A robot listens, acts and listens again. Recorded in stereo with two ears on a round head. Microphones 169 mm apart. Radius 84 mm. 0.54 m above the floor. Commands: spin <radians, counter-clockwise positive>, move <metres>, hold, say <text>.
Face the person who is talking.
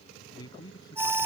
spin 0.35
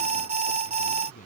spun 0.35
hold
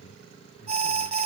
hold
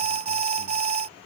say I heard a man speaking, but can't make it out now. It was about straight ahead or 140° left.